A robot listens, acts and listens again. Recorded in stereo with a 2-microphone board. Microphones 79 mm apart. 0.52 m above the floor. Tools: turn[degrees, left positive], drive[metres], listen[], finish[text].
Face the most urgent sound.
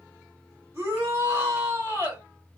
Thought: The shout: about 30° right or 150° right.
Action: turn[-30]
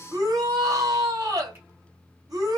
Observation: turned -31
Thought: So it is at 110° right.
Action: turn[-110]
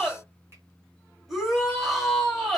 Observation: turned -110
Action: finish[Found it: a shout, straight ahead.]